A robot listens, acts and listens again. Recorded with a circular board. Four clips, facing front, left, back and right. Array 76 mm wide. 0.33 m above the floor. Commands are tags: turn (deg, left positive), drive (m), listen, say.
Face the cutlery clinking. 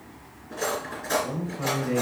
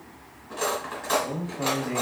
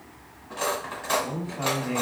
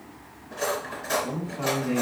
<turn deg="145"/>
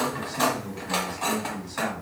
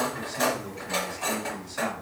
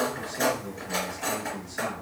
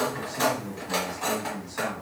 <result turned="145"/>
<say>Found it: cutlery clinking, straight ahead.</say>